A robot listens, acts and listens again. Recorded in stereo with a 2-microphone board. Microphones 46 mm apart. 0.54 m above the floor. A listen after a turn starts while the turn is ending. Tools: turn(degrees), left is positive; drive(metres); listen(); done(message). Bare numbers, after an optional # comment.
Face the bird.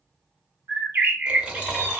# The bird: about 55° right or 125° right.
turn(-55)
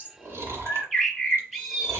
done("Facing the bird, under 1 m away.")